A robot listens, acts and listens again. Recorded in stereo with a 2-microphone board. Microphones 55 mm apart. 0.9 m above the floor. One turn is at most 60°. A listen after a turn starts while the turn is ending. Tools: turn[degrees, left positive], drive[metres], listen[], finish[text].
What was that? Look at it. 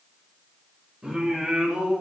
Thought: The singing: about 20° right or 160° right.
Action: turn[-20]
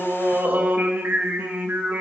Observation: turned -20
Thought: The singing: about 35° right or 145° right.
Action: turn[-35]
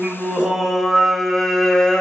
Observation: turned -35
Thought: So it is at 15° left.
Action: turn[15]
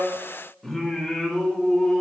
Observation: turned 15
Action: finish[Found it: singing, straight ahead.]